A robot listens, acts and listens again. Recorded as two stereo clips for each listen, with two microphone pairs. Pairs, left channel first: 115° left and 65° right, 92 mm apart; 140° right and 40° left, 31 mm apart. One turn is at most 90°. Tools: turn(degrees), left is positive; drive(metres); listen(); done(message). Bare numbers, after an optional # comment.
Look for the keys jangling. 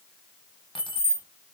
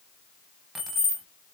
# The keys jangling: 130° left.
turn(90)
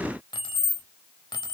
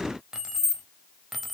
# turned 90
# The keys jangling is now 135° left.
turn(90)
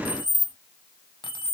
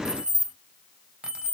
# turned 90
# The keys jangling is now 105° left.
turn(90)
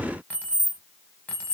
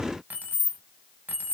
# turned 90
# The keys jangling is now 40° left.
turn(40)
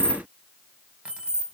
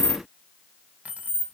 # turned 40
# The keys jangling is now 15° left.
turn(15)
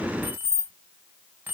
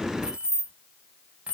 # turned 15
done("Found it: keys jangling, straight ahead.")